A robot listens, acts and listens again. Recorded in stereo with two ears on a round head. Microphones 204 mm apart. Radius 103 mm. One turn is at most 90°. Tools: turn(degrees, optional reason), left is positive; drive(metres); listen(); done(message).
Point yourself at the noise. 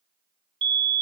turn(degrees=-20, reason="The fire alarm: about 20° right or 160° right.")
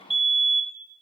done("Found it: a fire alarm, straight ahead.")